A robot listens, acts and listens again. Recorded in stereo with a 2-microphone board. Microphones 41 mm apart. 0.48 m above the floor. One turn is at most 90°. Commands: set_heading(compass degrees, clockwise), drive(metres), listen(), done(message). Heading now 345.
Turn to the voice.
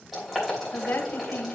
set_heading(285)
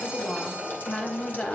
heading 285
set_heading(260)
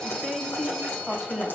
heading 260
done("Found it: a woman speaking, straight ahead, 1 to 2 m away.")